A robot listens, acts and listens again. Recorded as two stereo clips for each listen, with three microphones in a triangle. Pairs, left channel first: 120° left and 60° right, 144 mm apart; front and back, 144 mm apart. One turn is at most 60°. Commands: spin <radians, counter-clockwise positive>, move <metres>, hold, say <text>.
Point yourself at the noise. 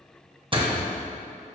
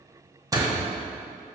spin -1.05
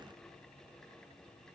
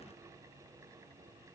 spin -0.96
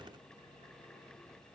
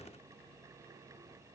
say I heard a door slam from this way, but can't make it out now.